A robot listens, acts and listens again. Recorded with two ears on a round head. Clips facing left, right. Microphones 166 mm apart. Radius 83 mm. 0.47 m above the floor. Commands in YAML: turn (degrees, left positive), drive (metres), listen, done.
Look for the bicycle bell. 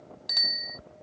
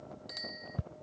turn: 90
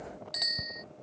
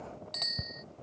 turn: 10
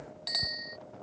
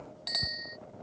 done: "Found it: a bicycle bell, straight ahead."